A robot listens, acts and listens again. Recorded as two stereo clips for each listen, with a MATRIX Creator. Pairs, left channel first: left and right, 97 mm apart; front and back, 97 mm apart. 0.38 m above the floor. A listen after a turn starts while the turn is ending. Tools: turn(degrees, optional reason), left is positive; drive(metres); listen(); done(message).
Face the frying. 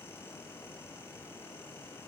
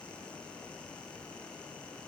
listen()
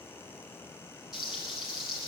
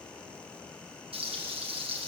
turn(degrees=-175, reason="The frying: 175° right.")
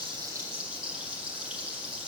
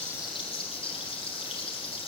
turn(degrees=-10, reason="The frying is now 10° right.")
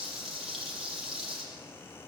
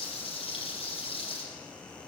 done("Found it: frying, straight ahead.")